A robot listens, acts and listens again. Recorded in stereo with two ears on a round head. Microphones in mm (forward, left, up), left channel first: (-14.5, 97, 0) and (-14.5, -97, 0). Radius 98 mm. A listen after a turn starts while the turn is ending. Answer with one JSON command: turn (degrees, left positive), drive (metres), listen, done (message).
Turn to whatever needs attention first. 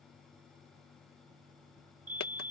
{"turn": -40}
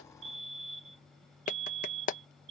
{"turn": -100}
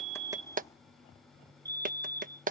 {"turn": -20}
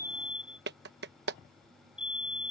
{"done": "Facing the fire alarm."}